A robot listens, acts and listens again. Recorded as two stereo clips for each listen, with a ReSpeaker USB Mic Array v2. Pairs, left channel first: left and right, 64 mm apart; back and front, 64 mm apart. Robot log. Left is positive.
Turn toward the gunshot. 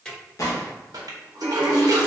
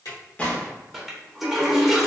note: The gunshot: 115° left.
cmd yaw +115
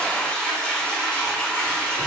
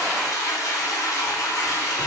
end: I heard a gunshot from this way, but can't make it out now.